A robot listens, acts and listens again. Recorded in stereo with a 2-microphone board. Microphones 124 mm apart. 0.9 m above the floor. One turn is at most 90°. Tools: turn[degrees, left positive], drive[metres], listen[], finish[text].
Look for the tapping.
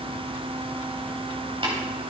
Thought: The tapping: about 45° right or 135° right.
Action: turn[-45]
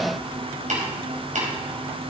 Thought: So it is at 90° right.
Action: turn[-90]
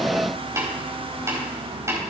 Thought: The tapping is now 25° right.
Action: turn[-25]
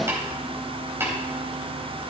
Thought: The tapping is now 20° right.
Action: turn[-20]
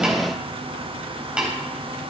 Thought: The tapping is now 10° right.
Action: turn[-10]
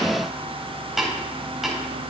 Action: finish[Found it: tapping, straight ahead.]